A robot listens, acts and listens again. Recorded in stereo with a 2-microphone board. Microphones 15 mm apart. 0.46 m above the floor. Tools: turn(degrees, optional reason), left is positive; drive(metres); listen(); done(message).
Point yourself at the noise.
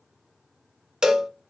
turn(degrees=-55, reason="The cowbell: about 55° right or 125° right.")
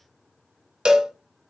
turn(degrees=-70, reason="So it is at 70° right.")
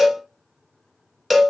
done("Found it: a cowbell, straight ahead.")